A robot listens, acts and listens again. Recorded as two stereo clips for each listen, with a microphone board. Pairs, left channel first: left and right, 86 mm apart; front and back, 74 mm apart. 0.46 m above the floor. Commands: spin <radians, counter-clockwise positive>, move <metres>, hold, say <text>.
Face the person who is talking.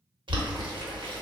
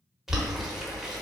hold
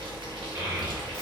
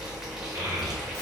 spin -2.53
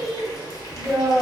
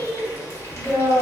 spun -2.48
say Found it: a child speaking, straight ahead, 1 to 2 m away.